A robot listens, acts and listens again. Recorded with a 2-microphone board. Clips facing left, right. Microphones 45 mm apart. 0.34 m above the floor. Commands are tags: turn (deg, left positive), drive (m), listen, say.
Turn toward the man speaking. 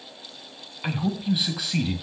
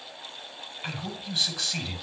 <turn deg="30"/>
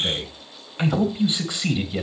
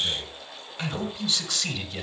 <turn deg="30"/>
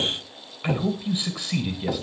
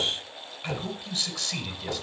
<turn deg="30"/>
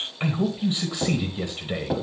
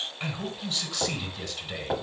<turn deg="20"/>
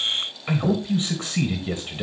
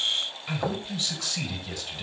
<turn deg="150"/>
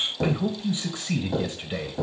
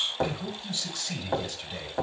<turn deg="25"/>
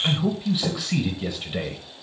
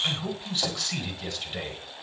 <turn deg="10"/>
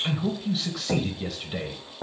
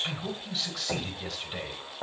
<say>Facing the man speaking, 1 to 2 m away.</say>